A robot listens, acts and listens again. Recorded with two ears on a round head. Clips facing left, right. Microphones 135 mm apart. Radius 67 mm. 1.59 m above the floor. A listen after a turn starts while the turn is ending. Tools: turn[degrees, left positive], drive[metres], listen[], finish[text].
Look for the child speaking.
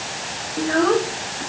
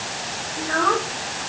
Thought: The child speaking: about 25° left or 155° left.
Action: turn[25]
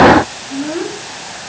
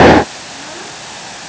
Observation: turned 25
Thought: So it is at 130° left.
Action: turn[130]
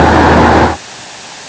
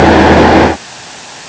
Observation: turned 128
Action: listen[]
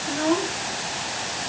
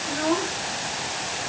Action: finish[Facing the child speaking.]